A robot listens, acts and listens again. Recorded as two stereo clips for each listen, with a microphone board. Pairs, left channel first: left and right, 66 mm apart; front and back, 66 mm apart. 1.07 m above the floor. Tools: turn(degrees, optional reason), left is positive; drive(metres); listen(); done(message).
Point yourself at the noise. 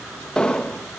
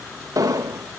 turn(degrees=165, reason="The explosion: 165° left.")
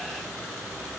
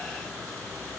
done("I heard an explosion from this way, but can't make it out now.")